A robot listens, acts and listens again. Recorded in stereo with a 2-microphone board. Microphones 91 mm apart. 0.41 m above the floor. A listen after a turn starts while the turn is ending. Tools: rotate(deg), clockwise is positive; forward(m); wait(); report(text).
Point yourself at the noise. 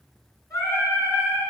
rotate(-40)
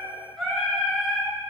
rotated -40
rotate(-10)
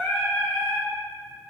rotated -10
report("Found it: singing, straight ahead.")